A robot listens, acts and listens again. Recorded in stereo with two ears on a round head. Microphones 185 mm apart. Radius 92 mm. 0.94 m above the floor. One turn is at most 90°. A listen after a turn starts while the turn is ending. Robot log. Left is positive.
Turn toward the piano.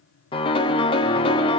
note: The piano: about 25° left or 155° left.
cmd yaw +25
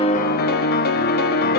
note: So it is at 130° left.
cmd yaw +90
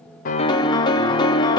note: The piano is now 20° left.
cmd yaw +20
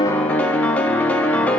end: Found it: a piano, straight ahead.